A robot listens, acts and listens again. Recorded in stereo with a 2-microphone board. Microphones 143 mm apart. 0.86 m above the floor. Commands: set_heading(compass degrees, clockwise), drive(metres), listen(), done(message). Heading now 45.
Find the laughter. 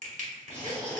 set_heading(10)
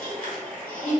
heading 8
set_heading(358)
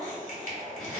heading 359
done("Found it: laughter, straight ahead.")